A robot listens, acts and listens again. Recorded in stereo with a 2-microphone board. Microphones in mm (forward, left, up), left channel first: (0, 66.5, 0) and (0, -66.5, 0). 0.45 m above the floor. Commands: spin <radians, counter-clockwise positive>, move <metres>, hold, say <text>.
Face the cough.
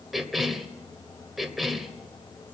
spin 0.52
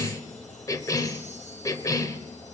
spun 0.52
spin 2.62
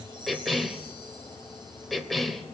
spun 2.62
say Facing the cough.